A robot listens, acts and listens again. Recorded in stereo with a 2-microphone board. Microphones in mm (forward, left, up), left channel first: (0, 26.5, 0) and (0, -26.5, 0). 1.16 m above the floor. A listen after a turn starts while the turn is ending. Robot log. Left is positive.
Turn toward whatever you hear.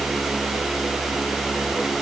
cmd idle
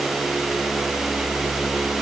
cmd idle
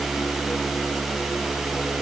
end: I can't make out anything.